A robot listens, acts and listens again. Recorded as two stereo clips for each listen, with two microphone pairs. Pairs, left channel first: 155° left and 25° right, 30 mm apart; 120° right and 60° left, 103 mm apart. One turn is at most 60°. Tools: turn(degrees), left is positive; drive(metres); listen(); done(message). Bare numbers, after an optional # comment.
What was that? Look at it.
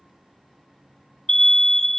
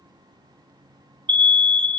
# The alarm: 80° left.
turn(60)
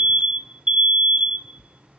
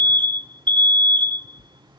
# The alarm is now 20° left.
turn(20)
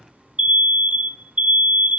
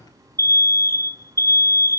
done("Found it: an alarm, straight ahead, 1 to 2 m away.")